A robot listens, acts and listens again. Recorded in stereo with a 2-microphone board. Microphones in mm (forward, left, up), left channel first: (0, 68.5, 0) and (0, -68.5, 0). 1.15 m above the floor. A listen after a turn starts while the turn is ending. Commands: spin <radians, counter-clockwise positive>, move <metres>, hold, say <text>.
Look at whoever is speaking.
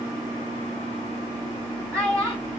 spin -0.44
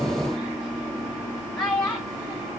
say Facing the child speaking, over 4 m away.